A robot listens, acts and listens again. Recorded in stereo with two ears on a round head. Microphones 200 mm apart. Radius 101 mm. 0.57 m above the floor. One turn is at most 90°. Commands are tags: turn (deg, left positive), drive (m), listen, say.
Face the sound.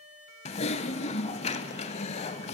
<turn deg="30"/>
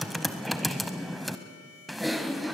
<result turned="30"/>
<say>Found it: typing on a keyboard, straight ahead.</say>